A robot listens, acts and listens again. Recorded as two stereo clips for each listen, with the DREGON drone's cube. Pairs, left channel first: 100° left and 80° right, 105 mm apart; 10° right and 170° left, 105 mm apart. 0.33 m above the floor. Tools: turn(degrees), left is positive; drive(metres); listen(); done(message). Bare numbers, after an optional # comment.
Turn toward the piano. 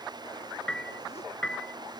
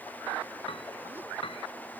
# The piano: 20° left.
turn(20)
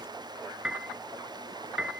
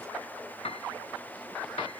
done("Found it: a piano, straight ahead.")